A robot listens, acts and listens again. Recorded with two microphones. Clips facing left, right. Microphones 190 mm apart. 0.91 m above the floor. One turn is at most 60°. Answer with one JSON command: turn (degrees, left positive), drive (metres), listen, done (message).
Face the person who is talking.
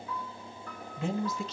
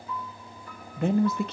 {"turn": -60}
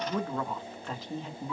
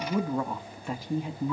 {"turn": -15}
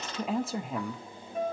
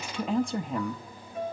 {"done": "Found it: a woman speaking, straight ahead, under 1 m away."}